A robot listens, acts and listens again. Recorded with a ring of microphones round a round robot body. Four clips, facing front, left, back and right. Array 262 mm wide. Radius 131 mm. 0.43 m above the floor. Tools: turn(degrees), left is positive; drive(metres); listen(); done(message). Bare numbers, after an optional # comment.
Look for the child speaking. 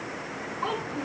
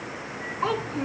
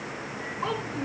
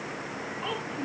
# The child speaking: 90° left.
turn(90)
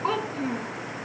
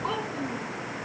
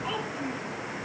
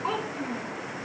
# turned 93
done("Found it: a child speaking, straight ahead.")